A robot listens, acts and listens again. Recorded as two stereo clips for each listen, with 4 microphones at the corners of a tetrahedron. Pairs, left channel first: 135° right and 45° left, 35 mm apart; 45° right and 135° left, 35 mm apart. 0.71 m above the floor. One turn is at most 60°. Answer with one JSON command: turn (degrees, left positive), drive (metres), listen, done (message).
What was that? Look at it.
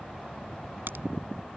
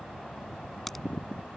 {"turn": 40}
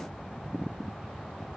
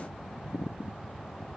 {"done": "Facing where the crack came from. I can't hear it now."}